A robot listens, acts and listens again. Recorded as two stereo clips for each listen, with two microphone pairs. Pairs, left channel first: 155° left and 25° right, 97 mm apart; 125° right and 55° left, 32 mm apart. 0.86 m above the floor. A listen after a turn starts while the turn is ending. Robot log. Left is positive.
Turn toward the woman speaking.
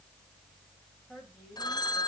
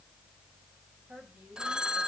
note: The woman speaking: 80° left.
cmd yaw +80
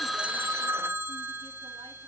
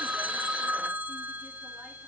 cmd idle
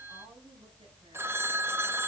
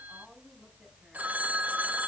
cmd idle
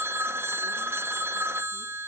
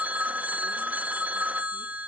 end: I heard a woman speaking from this way, but can't make it out now.